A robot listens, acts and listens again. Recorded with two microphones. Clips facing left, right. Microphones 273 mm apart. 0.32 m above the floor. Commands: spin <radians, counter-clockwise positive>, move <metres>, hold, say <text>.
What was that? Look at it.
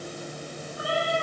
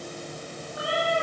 spin -1.57
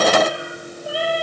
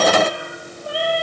say Found it: a cat meowing, straight ahead.